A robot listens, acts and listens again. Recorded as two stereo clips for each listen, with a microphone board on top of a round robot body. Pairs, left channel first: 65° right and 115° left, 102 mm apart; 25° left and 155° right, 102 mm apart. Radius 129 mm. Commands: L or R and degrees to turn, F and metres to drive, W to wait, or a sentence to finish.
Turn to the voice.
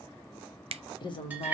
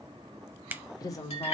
R35
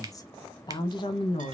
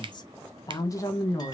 R45
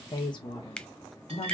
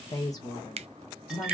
R45
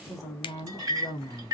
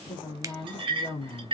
R10
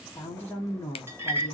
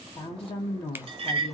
Found it: a woman speaking, straight ahead.